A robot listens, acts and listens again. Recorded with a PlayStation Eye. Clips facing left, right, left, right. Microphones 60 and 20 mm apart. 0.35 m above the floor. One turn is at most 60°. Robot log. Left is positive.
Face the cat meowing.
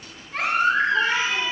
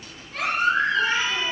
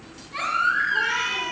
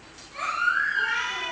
cmd yaw +60
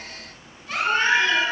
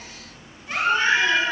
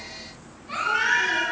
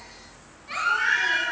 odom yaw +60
note: Nothing new. It was at 30° left.
cmd yaw +30
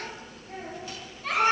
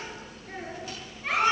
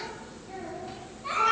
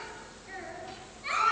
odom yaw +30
cmd idle
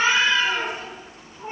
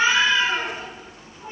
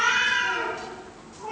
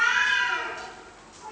note: The cat meowing is now 40° left.
cmd yaw +40
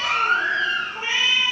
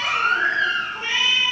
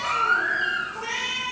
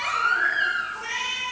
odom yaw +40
end: Found it: a cat meowing, straight ahead, 2 to 4 m away.